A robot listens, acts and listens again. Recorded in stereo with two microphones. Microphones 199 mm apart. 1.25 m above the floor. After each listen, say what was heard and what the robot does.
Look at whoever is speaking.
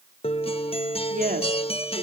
The woman speaking: about 45° right or 135° right. Turn 45° right.
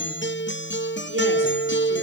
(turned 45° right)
Keep listening.
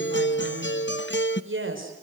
So it is at 95° right. Turn 95° right.
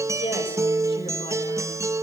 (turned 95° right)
Keep listening.
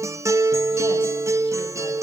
Keep listening.
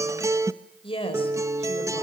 The woman speaking is now 25° left. Turn 25° left.
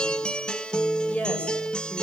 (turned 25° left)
Facing the woman speaking, over 4 m away.